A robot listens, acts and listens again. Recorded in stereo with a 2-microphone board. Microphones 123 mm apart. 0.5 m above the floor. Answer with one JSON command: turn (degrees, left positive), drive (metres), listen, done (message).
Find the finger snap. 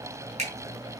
{"turn": -55}
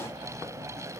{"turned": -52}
{"listen": true}
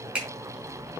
{"done": "Facing the finger snap, over 4 m away."}